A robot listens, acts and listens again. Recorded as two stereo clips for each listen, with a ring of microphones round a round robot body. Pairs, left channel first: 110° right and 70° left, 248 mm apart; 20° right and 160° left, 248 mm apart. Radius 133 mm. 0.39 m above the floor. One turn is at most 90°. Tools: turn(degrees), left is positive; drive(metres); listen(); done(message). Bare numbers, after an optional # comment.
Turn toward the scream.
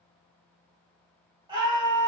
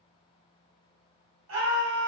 # The scream: 140° left.
turn(90)
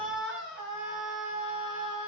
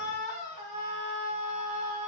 # The scream is now 30° left.
turn(30)
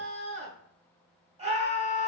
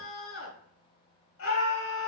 done("Found it: a scream, straight ahead.")